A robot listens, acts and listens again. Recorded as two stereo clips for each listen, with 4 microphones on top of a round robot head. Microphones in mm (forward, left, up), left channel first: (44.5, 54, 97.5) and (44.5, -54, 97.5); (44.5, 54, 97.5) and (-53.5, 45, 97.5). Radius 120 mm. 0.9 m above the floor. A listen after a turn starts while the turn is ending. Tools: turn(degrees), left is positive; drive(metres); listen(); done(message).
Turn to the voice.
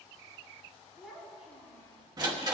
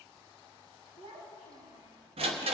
turn(degrees=180)
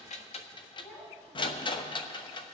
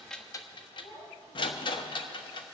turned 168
turn(degrees=10)
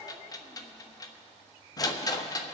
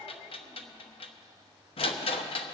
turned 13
listen()
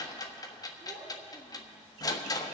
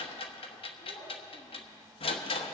done("Found it: a child speaking, straight ahead, over 4 m away.")